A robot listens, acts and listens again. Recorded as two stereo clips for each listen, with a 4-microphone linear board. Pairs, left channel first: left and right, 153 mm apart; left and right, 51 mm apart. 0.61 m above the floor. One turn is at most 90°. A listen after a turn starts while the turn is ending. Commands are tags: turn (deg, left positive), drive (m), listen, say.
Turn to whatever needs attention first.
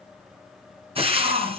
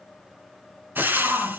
<turn deg="-50"/>
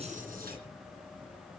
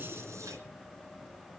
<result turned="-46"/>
<listen/>
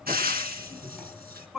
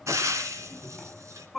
<say>Found it: a shout, straight ahead, over 4 m away.</say>